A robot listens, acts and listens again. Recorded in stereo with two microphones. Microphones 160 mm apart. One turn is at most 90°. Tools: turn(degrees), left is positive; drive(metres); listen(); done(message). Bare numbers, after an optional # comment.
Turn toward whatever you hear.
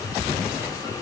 listen()
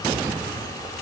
listen()
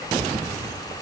done("I can't make out anything.")